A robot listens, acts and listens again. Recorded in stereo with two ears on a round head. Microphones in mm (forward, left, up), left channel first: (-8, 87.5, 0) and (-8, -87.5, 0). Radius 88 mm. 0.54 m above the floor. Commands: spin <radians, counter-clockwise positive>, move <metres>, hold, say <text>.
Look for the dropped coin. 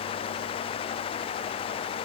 hold
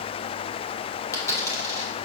spin 0.35
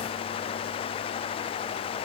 hold
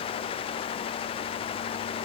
say I heard a dropped coin, but can't make it out now. It was about straight ahead or 140° left.